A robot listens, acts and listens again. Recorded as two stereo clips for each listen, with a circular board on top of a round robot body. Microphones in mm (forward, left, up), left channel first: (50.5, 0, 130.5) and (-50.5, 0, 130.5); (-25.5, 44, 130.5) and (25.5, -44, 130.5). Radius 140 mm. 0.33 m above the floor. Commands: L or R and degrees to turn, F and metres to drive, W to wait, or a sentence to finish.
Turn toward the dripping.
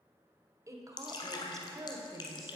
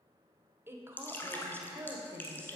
L50
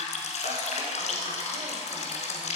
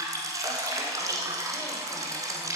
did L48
Facing the dripping, under 1 m away.